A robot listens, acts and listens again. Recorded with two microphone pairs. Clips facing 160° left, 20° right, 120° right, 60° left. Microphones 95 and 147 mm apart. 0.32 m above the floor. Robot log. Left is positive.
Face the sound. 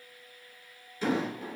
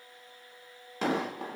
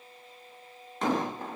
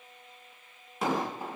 note: The explosion: 25° right.
cmd yaw -25
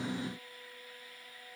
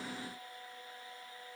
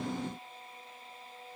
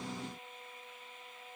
end: Facing where the explosion came from. I can't hear it now.